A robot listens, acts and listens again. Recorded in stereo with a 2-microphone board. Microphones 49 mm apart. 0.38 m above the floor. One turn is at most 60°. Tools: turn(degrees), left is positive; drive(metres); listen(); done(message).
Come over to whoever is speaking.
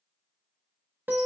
listen()
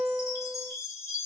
listen()
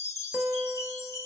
done("I can't make out anyone speaking, only a chime and a guitar.")